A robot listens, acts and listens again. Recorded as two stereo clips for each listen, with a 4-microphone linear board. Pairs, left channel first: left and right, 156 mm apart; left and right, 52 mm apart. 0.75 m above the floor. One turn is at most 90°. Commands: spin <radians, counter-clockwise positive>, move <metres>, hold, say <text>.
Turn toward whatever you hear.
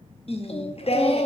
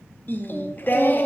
spin 0.70
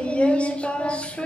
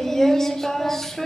spin 0.17
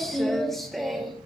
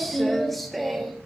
say Facing the singing, under 1 m away.